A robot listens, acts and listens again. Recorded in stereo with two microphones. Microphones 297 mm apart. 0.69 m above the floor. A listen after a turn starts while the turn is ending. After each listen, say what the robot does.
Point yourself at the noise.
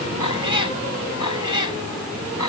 Turn 90° left.
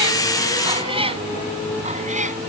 Turn 25° right.
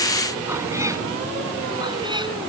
Keep listening.
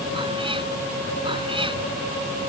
Keep listening.
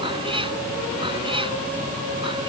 Turn 15° right.
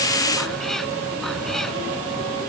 Keep listening.
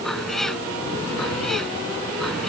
Found it: a cat meowing, straight ahead.